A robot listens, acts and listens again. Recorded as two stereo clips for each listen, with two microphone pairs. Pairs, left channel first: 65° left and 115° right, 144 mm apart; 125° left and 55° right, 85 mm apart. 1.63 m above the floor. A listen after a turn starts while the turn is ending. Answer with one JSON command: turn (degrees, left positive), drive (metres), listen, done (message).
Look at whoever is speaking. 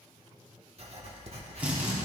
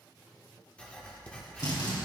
{"listen": true}
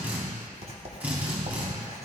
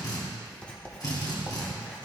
{"listen": true}
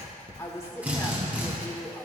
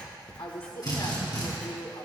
{"turn": 135}
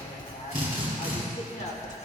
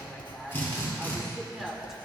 {"turn": 35}
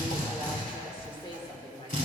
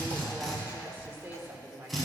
{"turn": 10}
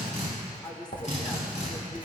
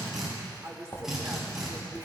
{"done": "Facing the woman speaking."}